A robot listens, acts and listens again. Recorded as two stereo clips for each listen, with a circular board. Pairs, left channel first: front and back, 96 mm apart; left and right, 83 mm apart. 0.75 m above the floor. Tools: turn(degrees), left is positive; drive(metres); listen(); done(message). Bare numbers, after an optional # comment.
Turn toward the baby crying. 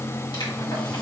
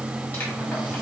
listen()
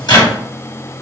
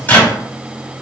listen()
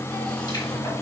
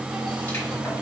done("I can't make out a baby crying, only a microwave.")